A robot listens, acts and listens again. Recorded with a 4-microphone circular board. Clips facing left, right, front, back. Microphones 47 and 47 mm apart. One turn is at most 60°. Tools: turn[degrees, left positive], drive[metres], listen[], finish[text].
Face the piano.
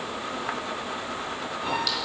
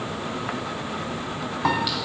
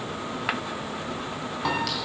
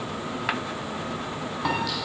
Thought: The piano: 95° right.
Action: turn[-60]
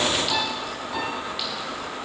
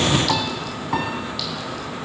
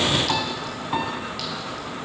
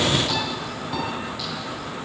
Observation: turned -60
Thought: The piano is now 60° right.
Action: turn[-60]
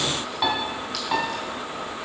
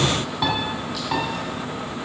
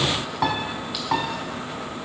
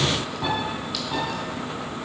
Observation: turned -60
Action: finish[Facing the piano, 1 to 2 m away.]